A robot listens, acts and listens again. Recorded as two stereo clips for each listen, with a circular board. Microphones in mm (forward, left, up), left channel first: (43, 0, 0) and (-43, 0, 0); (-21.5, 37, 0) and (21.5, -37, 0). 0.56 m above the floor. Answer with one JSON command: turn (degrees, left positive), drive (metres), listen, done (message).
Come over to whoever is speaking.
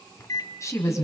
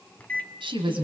{"turn": -50}
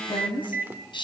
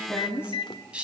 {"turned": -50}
{"turn": 15}
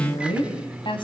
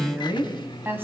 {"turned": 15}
{"drive": 1.0}
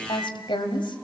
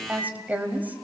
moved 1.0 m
{"turn": 10}
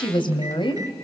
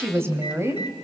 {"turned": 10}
{"drive": 1.0}
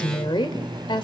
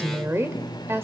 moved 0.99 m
{"drive": 1.0}
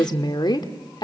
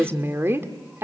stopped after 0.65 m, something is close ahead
{"done": "Arrived at the woman speaking, straight ahead."}